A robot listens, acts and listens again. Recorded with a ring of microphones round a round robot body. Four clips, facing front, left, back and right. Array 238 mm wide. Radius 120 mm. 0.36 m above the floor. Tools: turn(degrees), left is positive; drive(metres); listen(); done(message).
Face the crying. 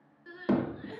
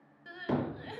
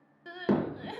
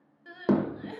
turn(degrees=180)
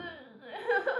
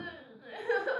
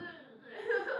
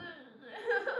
turn(degrees=10)
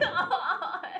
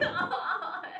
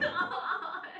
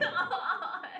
done("Found it: crying, straight ahead.")